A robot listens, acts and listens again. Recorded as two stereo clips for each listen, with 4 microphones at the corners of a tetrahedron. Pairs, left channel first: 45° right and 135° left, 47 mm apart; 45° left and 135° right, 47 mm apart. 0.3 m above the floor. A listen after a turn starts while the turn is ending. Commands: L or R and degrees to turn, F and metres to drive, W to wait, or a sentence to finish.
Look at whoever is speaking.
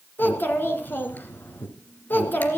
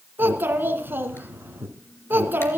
R90
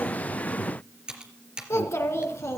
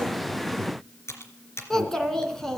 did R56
R35
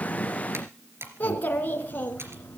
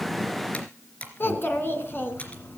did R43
L10
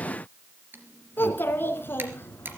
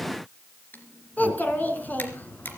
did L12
Found it: a child speaking, straight ahead, 2 to 4 m away.